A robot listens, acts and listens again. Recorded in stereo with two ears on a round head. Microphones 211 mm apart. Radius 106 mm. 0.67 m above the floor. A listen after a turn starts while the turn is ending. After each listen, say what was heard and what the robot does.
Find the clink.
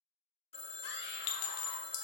Turn 90° left.
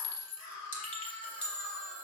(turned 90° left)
Facing the clink.